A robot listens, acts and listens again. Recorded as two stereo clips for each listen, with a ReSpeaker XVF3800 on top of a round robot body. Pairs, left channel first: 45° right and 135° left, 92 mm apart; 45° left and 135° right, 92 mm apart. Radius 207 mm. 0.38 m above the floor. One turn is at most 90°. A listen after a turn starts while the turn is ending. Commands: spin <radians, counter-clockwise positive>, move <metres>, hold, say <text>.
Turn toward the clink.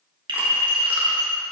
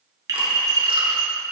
spin 1.57
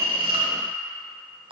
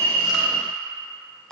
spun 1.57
spin 1.40
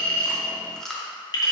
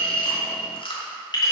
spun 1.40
say Facing the clink.